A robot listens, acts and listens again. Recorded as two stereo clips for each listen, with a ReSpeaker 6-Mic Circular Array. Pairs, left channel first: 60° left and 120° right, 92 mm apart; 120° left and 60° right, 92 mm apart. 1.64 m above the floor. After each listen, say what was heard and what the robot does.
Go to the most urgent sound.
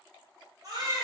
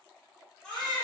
The baby crying: 155° right. Turn 155° right.
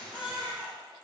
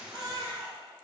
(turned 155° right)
The baby crying is now 30° right. Turn 30° right.
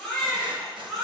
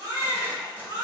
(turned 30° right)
The baby crying is now 20° right. Turn 20° right.
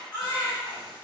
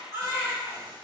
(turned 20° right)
Drive 1.0 m forward.
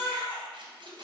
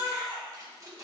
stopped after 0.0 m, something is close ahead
Blocked. The baby crying is further on, straight ahead.